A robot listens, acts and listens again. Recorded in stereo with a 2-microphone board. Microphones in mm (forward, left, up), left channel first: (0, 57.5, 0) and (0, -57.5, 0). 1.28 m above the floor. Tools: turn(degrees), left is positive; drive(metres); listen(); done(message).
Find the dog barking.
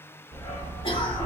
turn(degrees=55)
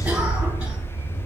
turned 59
turn(degrees=60)
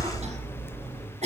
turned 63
turn(degrees=35)
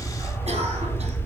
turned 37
turn(degrees=15)
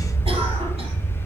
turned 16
done("Facing the dog barking.")